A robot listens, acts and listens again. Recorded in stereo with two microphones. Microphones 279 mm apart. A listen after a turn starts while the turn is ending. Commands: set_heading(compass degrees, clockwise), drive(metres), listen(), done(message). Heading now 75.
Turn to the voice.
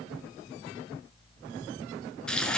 listen()
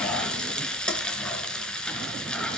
listen()
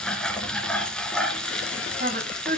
set_heading(115)
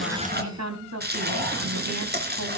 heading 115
set_heading(215)
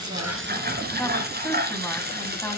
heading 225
done("Facing the woman speaking.")